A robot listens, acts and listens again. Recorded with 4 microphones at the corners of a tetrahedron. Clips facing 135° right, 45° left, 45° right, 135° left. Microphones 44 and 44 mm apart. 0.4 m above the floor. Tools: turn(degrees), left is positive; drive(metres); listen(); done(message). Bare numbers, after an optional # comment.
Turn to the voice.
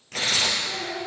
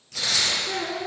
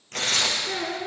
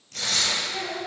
done("Facing the child speaking, 2 to 4 m away.")